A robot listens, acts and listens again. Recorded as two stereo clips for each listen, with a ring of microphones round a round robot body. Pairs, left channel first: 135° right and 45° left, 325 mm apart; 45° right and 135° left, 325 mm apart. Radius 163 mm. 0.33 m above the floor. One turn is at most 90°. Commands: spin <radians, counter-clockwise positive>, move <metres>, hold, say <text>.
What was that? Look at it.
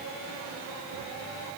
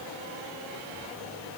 hold
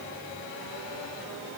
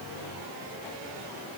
hold
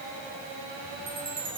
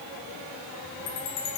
spin -0.52
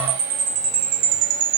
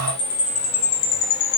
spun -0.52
spin 0.17
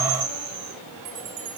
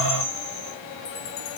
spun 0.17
say Facing the chime.